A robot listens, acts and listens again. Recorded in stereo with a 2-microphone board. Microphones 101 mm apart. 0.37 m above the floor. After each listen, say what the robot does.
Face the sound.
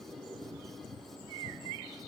Keep listening.
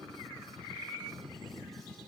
Keep listening.
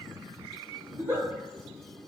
Turn 20° right.
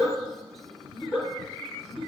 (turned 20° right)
Facing the giggle.